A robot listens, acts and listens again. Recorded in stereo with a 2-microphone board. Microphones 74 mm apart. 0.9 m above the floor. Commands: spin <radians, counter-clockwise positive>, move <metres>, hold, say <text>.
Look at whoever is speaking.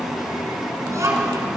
spin -0.79
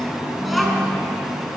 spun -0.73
say Facing the child speaking.